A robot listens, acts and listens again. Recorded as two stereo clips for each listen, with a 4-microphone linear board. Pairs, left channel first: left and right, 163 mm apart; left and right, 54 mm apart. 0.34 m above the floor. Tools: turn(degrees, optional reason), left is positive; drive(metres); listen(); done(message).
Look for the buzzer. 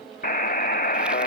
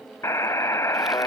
turn(degrees=60, reason="The buzzer: about 60° left or 120° left.")
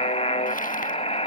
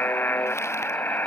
turn(degrees=45, reason="So it is at 45° left.")
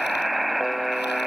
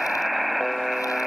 done("Found it: a buzzer, straight ahead.")